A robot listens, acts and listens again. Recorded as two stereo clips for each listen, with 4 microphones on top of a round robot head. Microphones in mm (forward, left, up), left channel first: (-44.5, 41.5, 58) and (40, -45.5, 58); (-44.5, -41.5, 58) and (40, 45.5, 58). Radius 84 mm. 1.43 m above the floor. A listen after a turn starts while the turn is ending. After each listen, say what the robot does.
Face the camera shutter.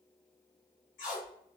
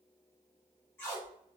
Keep listening.
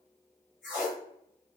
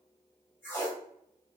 Keep listening.
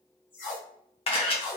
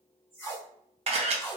Turn 90° left.
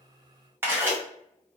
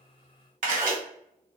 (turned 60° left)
Turn 25° left.
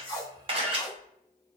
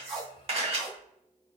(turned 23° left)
Facing the camera shutter, under 1 m away.